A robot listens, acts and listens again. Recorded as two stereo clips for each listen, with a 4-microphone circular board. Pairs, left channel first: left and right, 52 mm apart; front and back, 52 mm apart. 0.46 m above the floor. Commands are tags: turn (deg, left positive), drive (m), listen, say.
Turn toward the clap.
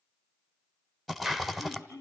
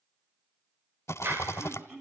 <turn deg="-175"/>
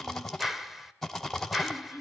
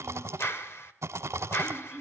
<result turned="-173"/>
<say>Found it: a clap, straight ahead, 1 to 2 m away.</say>